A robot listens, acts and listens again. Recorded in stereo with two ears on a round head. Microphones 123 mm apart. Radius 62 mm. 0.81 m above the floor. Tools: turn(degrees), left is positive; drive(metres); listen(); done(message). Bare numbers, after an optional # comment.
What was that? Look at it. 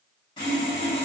# The sawing: about 30° left or 150° left.
turn(30)
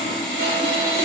# So it is at 115° left.
turn(115)
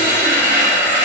# The sawing is now 10° right.
turn(-10)
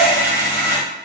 done("Facing the sawing.")